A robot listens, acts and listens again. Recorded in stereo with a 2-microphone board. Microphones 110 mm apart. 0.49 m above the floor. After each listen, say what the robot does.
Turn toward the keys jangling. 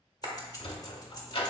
Turn 35° left.
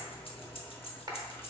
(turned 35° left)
Turn 100° left.
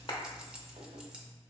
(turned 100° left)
Turn 10° right.
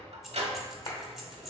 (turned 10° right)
Found it: keys jangling, straight ahead.